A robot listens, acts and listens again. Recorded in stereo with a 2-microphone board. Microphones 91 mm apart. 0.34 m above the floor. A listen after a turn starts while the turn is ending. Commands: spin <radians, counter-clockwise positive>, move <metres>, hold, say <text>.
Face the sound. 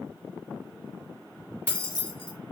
spin 0.52
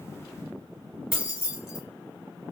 spin -0.26
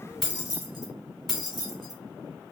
say Facing the keys jangling.